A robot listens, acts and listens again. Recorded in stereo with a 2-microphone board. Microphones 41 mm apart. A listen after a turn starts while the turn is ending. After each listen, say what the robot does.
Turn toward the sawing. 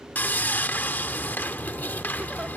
Turn 55° left.
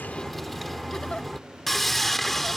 Found it: sawing, straight ahead.